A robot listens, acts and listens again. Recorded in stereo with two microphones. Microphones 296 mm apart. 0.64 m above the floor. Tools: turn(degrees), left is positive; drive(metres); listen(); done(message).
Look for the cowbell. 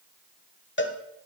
turn(degrees=40)
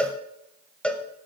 done("Found it: a cowbell, straight ahead, under 1 m away.")